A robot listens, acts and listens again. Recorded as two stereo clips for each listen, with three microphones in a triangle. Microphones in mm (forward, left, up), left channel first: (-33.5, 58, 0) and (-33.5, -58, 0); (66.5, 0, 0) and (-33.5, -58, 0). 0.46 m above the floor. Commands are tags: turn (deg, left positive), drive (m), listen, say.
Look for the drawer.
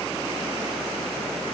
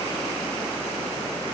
<listen/>
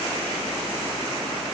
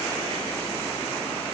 <listen/>
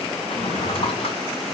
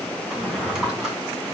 <turn deg="125"/>
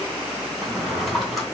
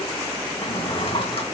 <say>Found it: a drawer, straight ahead, 2 to 4 m away.</say>